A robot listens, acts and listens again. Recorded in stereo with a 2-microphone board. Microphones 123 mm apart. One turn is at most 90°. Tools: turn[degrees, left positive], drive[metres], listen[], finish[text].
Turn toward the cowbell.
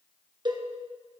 Thought: The cowbell: about 40° right or 140° right.
Action: turn[-40]
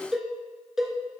Action: finish[Facing the cowbell.]